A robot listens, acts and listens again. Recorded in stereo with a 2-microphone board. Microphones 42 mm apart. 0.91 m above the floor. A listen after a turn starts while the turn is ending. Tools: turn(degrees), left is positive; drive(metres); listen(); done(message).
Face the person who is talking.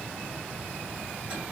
listen()
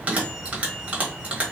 listen()
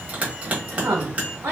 turn(degrees=-65)
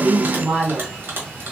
turn(degrees=-30)
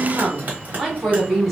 done("Facing the woman speaking, 1 to 2 m away.")